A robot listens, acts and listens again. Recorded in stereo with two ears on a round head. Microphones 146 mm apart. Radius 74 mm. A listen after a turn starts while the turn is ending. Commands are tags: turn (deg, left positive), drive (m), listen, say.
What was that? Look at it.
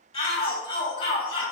<turn deg="30"/>
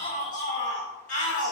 <turn deg="115"/>
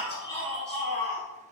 <say>Facing the shout.</say>